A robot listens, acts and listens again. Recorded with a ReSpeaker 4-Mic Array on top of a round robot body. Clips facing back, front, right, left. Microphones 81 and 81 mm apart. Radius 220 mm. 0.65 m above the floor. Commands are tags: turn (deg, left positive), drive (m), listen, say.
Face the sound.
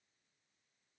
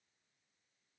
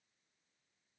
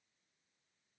<listen/>
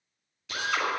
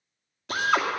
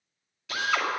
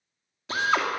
<turn deg="35"/>
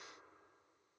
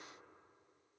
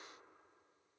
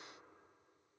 <listen/>
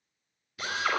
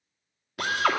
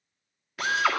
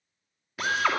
<say>Found it: a drill, straight ahead, 2 to 4 m away.</say>